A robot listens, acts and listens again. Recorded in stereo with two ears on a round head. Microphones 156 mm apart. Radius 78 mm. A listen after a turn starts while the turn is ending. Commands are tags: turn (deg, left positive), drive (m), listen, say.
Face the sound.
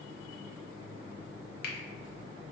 <turn deg="60"/>
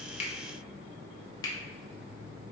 <turn deg="25"/>
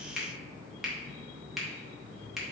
<say>Found it: a finger snap, straight ahead.</say>